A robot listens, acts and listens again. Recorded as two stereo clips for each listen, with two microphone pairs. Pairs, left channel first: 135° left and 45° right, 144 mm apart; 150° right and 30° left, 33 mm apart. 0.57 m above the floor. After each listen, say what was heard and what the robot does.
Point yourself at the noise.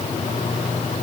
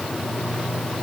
Keep listening.
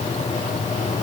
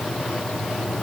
Keep listening.
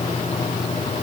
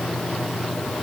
I can't make out anything to turn to.